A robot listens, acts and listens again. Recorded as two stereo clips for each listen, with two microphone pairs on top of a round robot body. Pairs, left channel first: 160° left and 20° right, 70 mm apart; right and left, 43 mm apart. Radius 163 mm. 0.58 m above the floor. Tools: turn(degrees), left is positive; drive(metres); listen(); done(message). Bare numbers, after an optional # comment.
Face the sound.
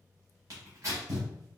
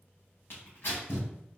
# The tearing paper: 60° right.
turn(-60)
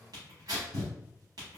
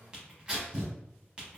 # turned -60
# The tearing paper is now 15° left.
turn(15)
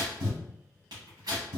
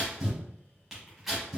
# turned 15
done("Facing the tearing paper, under 1 m away.")